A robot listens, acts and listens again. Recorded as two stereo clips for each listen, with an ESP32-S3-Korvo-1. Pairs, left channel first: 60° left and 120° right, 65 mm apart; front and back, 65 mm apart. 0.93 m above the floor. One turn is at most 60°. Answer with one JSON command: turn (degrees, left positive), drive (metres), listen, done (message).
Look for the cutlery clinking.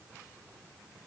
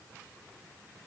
{"listen": true}
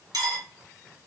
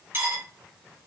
{"turn": -60}
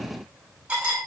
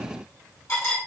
{"turn": -50}
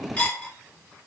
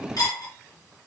{"done": "Found it: cutlery clinking, straight ahead, 1 to 2 m away."}